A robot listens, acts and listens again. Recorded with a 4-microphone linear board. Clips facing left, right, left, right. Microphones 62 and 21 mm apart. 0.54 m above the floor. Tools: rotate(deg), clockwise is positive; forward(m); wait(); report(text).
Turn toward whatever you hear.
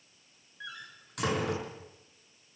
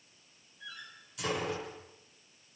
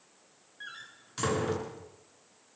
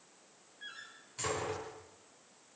rotate(-65)
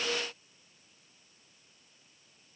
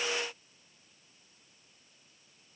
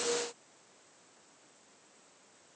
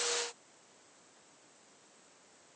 wait()
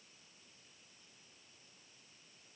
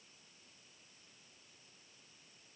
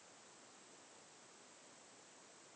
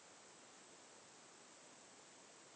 report("I heard a door slam, but can't make it out now. It was about straight ahead or 50° left.")